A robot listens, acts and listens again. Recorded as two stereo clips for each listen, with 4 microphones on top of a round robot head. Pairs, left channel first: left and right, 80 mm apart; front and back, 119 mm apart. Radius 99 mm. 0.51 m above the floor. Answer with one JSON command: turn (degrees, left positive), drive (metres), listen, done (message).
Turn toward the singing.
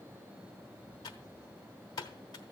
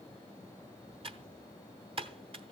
{"listen": true}
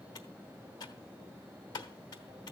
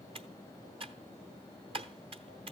{"listen": true}
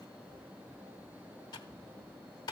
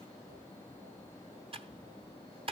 {"done": "I can't make out singing to turn to."}